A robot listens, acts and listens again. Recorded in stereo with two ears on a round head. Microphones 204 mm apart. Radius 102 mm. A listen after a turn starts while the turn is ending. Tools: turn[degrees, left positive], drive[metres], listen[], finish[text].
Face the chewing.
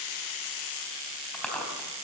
Action: turn[30]
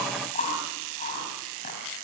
Thought: So it is at 145° left.
Action: turn[145]
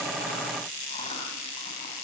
Action: listen[]
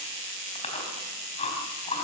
Thought: The chewing is now 30° left.
Action: turn[30]
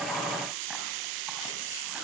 Action: listen[]
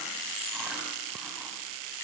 Action: listen[]
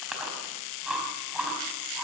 Action: finish[Facing the chewing, over 4 m away.]